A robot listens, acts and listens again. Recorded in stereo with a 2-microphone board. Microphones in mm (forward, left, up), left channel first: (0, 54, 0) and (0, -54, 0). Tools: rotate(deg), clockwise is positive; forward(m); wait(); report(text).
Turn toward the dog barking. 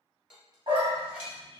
rotate(50)
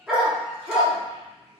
report("Facing the dog barking.")